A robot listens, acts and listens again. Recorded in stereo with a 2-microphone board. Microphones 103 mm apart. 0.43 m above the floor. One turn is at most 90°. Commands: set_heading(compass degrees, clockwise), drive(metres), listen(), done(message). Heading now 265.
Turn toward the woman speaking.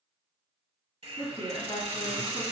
set_heading(200)
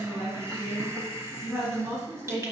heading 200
done("Found it: a woman speaking, straight ahead.")